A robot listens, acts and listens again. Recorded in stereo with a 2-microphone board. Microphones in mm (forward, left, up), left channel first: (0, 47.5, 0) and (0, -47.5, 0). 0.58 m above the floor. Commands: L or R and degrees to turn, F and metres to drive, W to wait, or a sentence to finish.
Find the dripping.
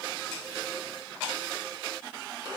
W
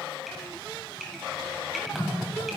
L30
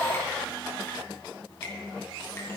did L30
W
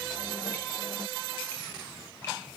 L150
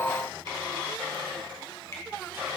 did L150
L30
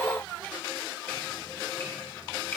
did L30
W
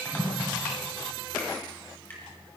L20
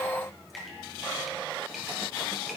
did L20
Facing the dripping.